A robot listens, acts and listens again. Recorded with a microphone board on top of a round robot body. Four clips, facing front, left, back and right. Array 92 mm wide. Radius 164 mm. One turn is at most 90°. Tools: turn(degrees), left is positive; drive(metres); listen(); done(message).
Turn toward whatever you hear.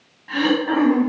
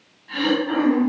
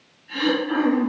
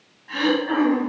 turn(degrees=-15)
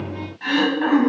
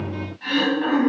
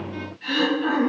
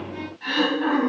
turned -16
done("Facing the throat clearing.")